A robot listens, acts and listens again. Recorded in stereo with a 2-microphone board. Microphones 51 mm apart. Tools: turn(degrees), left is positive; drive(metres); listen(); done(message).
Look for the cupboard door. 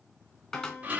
turn(degrees=30)
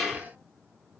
listen()
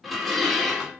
listen()
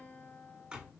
turn(degrees=-15)
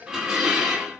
listen()
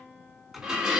done("Found it: a cupboard door, straight ahead, 2 to 4 m away.")